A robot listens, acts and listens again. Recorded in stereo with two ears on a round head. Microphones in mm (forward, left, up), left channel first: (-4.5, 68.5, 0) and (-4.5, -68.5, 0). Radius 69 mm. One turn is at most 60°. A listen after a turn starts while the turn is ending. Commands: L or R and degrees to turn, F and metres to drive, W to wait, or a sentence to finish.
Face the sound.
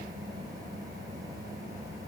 W
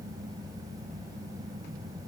W
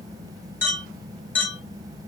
L30
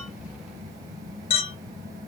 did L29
L60
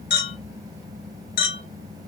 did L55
L60
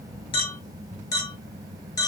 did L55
L25
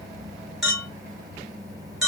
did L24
Found it: a clink, straight ahead.